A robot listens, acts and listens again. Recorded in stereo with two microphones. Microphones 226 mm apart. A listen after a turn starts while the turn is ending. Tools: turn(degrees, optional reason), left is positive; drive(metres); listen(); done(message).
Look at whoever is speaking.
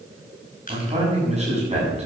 turn(degrees=-30, reason="The man speaking: about 30° right or 150° right.")
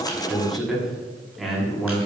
done("Found it: a man speaking, straight ahead, over 4 m away.")